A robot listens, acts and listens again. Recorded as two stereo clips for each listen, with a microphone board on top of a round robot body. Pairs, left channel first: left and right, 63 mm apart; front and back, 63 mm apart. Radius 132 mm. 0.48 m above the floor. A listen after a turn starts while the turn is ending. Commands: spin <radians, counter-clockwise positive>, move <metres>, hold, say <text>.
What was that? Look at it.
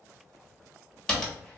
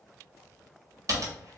spin 2.97
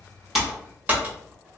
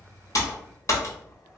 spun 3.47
spin -0.52
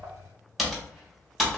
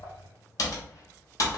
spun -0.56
say Facing the typing on a keyboard, 1 to 2 m away.